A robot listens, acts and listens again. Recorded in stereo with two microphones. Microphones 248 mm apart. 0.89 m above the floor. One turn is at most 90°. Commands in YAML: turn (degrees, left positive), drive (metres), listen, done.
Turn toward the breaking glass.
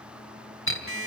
turn: 55
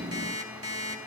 listen: true
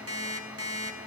done: "I heard breaking glass, but can't make it out now. It was about straight ahead or 70° left."